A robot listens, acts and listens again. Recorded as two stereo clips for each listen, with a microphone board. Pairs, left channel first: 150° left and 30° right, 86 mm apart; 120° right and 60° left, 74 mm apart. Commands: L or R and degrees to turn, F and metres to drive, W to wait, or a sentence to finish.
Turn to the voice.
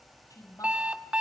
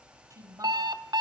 L105
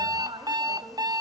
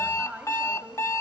R15
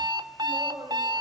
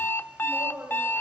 Found it: a woman speaking, straight ahead, over 4 m away.